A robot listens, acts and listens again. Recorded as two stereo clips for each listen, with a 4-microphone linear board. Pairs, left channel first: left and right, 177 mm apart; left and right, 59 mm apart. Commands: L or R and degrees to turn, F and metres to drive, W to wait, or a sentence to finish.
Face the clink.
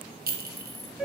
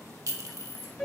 R60
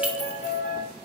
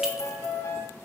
W
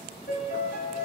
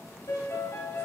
W
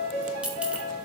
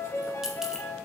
R10
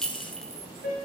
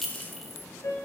Facing the clink, 1 to 2 m away.